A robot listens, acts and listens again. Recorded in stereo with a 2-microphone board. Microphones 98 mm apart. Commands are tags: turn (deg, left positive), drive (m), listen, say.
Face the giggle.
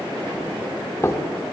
<listen/>
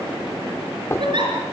<turn deg="-50"/>
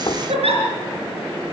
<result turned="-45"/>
<turn deg="-80"/>
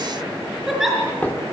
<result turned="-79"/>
<say>Facing the giggle, over 4 m away.</say>